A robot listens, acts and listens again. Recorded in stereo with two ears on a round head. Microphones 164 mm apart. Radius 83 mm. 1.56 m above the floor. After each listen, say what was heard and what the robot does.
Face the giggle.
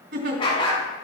The giggle: about 60° right or 120° right. Turn 60° right.
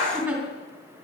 So it is at 10° right. Turn 10° right.
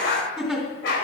Found it: a giggle, straight ahead.